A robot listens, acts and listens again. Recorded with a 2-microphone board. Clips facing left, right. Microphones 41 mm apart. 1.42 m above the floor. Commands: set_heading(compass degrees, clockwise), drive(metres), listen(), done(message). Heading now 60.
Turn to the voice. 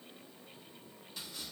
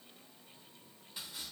listen()
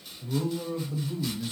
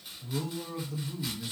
set_heading(30)
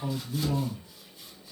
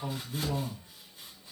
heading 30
done("Facing the man speaking, 1 to 2 m away.")